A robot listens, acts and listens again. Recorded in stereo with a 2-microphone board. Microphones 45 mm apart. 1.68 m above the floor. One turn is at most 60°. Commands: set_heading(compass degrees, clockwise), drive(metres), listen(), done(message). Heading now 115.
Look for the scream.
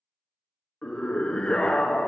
set_heading(95)
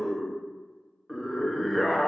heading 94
done("Facing the scream, under 1 m away.")